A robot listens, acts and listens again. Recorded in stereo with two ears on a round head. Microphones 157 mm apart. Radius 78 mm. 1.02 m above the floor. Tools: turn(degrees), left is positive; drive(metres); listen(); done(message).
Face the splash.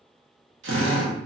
listen()
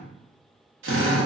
listen()
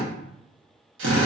done("I can't make out a splash to turn to.")